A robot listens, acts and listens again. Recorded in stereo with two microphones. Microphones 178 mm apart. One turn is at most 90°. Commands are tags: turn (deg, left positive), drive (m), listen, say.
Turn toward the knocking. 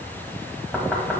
<turn deg="30"/>
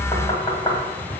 <turn deg="90"/>
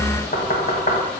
<turn deg="65"/>
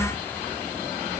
<listen/>
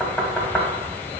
<say>Found it: knocking, straight ahead, 1 to 2 m away.</say>